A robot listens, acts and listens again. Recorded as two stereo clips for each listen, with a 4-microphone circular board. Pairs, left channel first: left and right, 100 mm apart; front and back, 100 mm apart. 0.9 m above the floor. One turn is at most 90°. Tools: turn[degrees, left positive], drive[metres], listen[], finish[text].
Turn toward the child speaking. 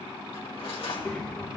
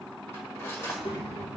Thought: The child speaking: 15° left.
Action: turn[15]
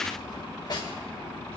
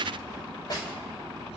Action: listen[]
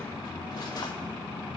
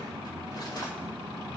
Thought: The child speaking is now 25° left.
Action: turn[25]
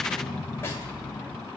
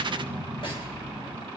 Thought: The child speaking is now 10° left.
Action: turn[10]
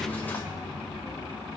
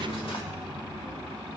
Action: finish[Facing the child speaking, 2 to 4 m away.]